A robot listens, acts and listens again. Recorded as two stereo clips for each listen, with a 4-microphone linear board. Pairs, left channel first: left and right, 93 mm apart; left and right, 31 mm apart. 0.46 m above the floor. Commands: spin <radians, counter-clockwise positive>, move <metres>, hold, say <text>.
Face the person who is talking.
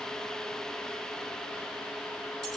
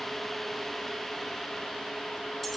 hold
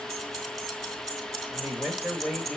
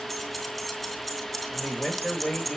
spin 0.52
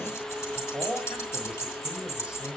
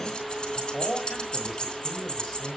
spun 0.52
spin -0.26
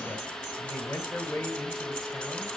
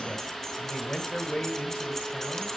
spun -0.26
spin 0.17
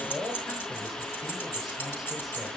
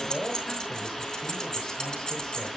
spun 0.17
say Facing the man speaking, 2 to 4 m away.